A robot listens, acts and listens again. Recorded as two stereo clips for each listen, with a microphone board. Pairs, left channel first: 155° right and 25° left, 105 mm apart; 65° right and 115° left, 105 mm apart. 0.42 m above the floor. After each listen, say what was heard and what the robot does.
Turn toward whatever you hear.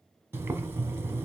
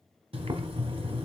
The boiling: 90° left. Turn 90° left.
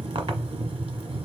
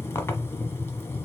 Facing the boiling.